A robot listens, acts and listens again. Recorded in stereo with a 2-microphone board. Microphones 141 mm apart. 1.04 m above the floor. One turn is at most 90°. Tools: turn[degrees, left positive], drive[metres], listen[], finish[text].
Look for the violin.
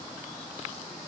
Action: listen[]
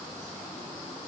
Action: listen[]
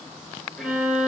Action: turn[-30]
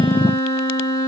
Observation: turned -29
Thought: So it is at 25° left.
Action: turn[25]
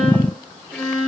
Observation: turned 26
Action: finish[Found it: a violin, straight ahead.]